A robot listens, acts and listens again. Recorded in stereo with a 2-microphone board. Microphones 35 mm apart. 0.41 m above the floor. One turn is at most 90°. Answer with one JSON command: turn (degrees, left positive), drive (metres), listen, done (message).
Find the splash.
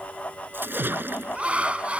{"turn": -90}
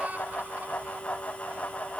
{"done": "Facing where the splash came from. I can't hear it now."}